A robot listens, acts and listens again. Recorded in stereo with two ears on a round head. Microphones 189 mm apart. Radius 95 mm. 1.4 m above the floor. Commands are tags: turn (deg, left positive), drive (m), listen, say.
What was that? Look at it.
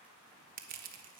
<turn deg="-45"/>
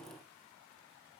<listen/>
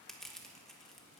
<say>Found it: crushing, straight ahead.</say>